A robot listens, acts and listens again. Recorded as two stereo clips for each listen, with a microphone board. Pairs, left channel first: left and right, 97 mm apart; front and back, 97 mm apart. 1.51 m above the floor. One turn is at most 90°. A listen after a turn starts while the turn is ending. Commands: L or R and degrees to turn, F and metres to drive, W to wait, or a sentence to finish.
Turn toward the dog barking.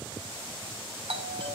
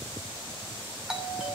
W
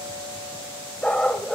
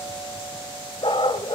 L10
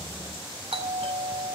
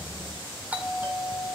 W
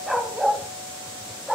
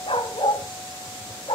Found it: a dog barking, straight ahead.